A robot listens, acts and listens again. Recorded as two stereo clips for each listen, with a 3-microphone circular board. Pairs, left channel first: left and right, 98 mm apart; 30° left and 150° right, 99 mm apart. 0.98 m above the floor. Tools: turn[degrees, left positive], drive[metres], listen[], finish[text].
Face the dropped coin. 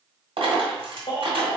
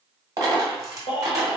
Thought: The dropped coin: 100° right.
Action: turn[-100]
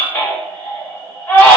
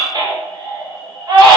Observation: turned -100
Action: finish[Facing where the dropped coin came from. I can't hear it now.]